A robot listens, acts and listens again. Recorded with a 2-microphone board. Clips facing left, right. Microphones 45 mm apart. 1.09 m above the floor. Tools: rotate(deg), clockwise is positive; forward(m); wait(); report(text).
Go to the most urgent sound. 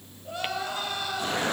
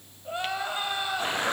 rotate(25)
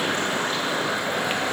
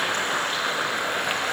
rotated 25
wait()
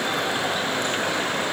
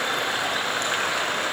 wait()
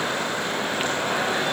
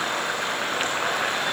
report("I heard crying, but can't make it out now. It was about straight ahead or 130° right. I did not reach it.")